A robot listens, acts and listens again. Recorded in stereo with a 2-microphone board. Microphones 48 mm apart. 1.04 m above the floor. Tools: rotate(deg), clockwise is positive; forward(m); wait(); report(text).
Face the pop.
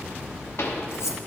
rotate(-70)
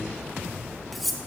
wait()
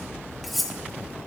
report("I heard a pop, but can't make it out now. It was about straight ahead or 40° left.")